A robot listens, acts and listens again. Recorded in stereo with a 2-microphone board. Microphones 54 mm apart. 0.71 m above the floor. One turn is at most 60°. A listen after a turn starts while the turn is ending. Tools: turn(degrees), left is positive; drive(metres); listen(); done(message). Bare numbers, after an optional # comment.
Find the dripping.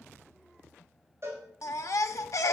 listen()
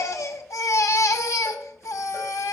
listen()
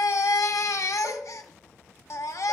done("I can't make out dripping to turn to.")